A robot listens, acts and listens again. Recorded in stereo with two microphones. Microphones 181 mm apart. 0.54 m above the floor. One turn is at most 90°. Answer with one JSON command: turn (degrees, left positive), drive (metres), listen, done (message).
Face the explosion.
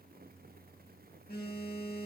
{"listen": true}
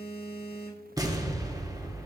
{"turn": -20}
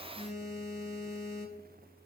{"listen": true}
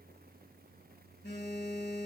{"done": "I heard an explosion, but can't make it out now. It was about straight ahead or 140° right."}